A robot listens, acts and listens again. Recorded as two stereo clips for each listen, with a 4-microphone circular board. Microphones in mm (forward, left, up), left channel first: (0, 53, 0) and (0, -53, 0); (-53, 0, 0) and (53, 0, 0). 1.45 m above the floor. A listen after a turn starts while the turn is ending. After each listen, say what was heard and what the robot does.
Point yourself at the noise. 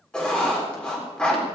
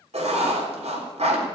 The writing: 10° left. Turn 10° left.
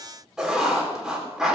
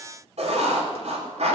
Found it: writing, straight ahead, 2 to 4 m away.